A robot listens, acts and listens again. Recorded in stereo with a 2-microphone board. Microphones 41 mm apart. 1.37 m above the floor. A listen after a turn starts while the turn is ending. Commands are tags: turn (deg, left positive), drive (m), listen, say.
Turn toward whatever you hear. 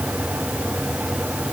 <listen/>
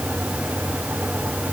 <listen/>
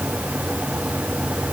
<say>I can't make out anything to turn to.</say>